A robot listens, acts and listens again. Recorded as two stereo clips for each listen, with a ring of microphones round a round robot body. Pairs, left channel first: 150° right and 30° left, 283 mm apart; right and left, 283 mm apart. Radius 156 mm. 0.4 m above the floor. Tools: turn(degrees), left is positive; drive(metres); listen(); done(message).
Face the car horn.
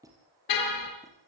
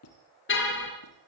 turn(degrees=-140)
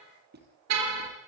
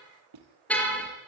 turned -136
done("Facing the car horn.")